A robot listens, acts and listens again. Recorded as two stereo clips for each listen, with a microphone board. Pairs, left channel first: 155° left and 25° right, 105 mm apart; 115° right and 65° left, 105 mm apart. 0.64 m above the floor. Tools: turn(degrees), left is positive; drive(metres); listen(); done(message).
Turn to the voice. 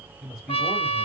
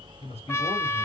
turn(degrees=-110)
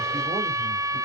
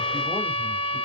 listen()
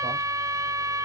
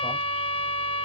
listen()
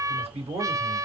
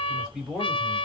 turn(degrees=-15)
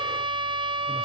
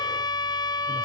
listen()
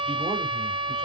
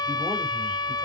listen()
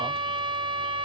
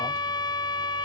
done("Facing where the man speaking came from. I can't hear it now.")